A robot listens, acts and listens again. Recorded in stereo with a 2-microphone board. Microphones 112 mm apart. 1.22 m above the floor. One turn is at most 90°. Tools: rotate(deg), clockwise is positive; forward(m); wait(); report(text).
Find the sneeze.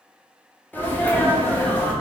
rotate(-15)
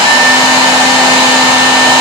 wait()
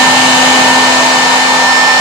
report("I heard a sneeze, but can't make it out now. It was about straight ahead or 150° left.")